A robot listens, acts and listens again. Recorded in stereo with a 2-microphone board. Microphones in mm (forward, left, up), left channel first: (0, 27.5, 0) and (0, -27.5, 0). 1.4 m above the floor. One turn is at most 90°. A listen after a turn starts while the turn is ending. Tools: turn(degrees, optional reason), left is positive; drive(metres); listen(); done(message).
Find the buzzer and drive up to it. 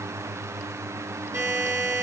turn(degrees=-90)
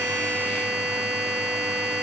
drive(metres=1.0)
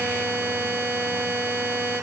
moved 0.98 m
turn(degrees=-10, reason="The buzzer is now 10° right.")
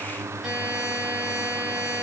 drive(metres=1.0)
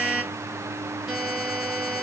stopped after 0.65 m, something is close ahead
turn(degrees=-10, reason="The buzzer is now 10° right.")
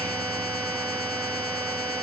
done("I am next to the buzzer.")